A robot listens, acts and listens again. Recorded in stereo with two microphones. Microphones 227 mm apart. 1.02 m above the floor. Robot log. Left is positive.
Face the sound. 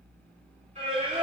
note: The singing: about 30° right or 150° right.
cmd yaw -30
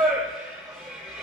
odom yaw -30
end: Found it: singing, straight ahead.